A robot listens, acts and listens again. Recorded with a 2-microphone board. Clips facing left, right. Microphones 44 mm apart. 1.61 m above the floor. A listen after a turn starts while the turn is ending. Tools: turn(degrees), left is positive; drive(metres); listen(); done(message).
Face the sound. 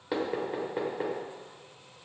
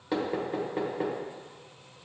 turn(degrees=30)
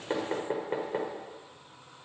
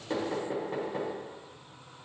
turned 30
turn(degrees=145)
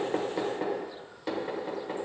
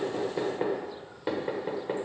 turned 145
turn(degrees=-15)
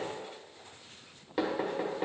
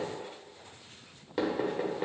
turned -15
done("Found it: knocking, straight ahead, 1 to 2 m away.")